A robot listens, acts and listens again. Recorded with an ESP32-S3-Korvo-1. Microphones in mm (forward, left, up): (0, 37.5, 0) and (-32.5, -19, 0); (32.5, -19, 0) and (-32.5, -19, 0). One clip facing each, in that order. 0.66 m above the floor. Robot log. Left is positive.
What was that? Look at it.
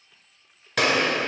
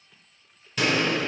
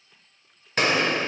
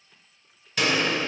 note: The gunshot: 50° left.
cmd yaw +50
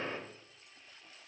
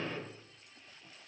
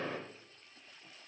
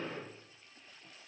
end: Facing the gunshot.